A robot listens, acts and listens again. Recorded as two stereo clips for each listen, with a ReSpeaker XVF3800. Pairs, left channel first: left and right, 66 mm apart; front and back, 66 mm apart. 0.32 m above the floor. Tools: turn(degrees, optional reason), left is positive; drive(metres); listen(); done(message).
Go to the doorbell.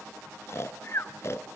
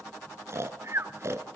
listen()
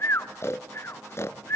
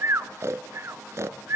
listen()
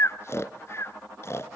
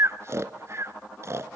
done("I can't make out a doorbell to turn to.")